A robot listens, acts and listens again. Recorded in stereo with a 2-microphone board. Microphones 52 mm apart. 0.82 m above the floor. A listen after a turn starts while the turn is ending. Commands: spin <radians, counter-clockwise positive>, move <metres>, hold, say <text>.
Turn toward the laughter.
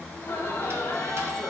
spin 1.13
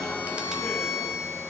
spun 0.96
hold
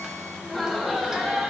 spin -0.26
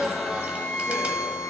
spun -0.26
spin -0.17
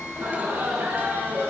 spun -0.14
spin -0.70
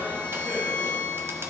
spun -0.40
spin -0.26
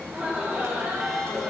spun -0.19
spin -0.17
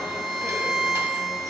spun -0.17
hold
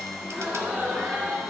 say Facing the laughter.